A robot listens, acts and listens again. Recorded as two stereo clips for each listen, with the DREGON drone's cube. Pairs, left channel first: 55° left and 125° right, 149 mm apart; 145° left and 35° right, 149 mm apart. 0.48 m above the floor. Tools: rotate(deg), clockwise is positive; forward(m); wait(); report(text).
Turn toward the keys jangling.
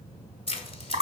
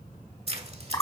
rotate(-10)
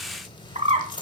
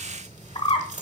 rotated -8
report("Facing the keys jangling.")